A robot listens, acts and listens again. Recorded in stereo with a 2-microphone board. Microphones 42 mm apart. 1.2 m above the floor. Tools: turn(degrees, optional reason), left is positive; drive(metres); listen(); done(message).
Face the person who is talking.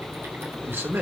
turn(degrees=-70, reason="The man speaking: about 70° right or 110° right.")
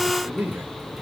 turn(degrees=-40, reason="So it is at 40° right.")
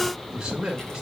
turn(degrees=-15, reason="The man speaking is now 15° right.")
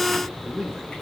done("Found it: a man speaking, straight ahead, 2 to 4 m away.")